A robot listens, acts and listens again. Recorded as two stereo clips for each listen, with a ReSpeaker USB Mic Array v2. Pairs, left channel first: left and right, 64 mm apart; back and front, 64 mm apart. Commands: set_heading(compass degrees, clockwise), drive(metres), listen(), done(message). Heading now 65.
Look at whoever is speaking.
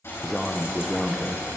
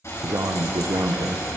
done("Found it: a man speaking, straight ahead, under 1 m away.")